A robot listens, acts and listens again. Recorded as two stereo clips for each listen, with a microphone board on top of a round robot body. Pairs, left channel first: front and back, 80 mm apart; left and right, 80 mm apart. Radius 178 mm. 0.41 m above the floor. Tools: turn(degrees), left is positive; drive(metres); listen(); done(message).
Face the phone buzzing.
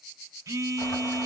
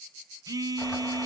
turn(degrees=-130)
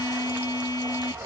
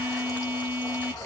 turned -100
turn(degrees=-30)
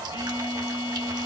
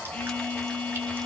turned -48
turn(degrees=20)
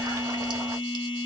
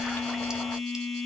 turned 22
done("Found it: a phone buzzing, straight ahead.")